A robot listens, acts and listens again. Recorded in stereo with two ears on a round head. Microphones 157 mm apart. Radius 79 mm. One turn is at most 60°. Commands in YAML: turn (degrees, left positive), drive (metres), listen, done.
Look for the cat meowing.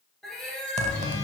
turn: 30
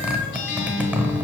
listen: true
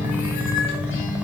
listen: true
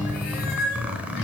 turn: 60
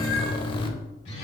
turn: 50
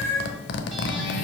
turn: 20
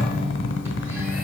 listen: true
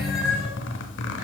done: "Facing the cat meowing."